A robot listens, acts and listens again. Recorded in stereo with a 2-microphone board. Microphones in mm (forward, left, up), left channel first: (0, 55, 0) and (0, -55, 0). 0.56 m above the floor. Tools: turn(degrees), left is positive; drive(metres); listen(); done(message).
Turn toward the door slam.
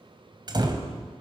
turn(degrees=-40)
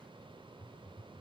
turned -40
listen()
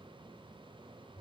done("I heard a door slam, but can't make it out now. It was about straight ahead or 100° right.")